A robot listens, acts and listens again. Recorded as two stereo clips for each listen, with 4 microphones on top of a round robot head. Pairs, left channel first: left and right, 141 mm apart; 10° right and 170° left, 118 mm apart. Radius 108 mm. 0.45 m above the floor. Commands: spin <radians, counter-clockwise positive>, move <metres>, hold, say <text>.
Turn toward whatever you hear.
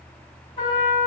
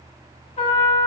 spin 0.52
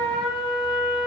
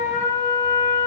spin 0.17
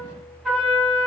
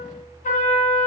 say Facing the trumpet, 1 to 2 m away.